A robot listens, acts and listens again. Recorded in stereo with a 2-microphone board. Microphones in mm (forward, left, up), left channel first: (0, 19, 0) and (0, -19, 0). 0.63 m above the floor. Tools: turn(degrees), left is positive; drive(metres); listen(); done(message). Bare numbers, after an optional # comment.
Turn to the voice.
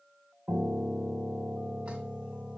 listen()
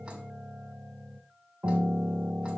listen()
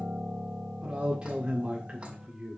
# The man speaking: about 30° right or 150° right.
turn(-30)
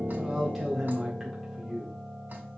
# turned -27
done("Found it: a man speaking, straight ahead.")